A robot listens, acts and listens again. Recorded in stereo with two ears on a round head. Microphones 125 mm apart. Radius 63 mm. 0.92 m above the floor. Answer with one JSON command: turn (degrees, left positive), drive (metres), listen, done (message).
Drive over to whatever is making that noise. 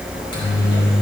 {"turn": 35}
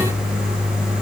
{"turn": 110}
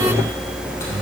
{"turn": 20}
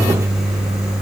{"drive": 1.0}
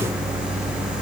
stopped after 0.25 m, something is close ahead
{"listen": true}
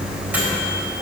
{"listen": true}
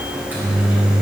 {"turn": -15}
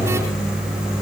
{"done": "Something is in my way. I am facing the microwave but have not reached it."}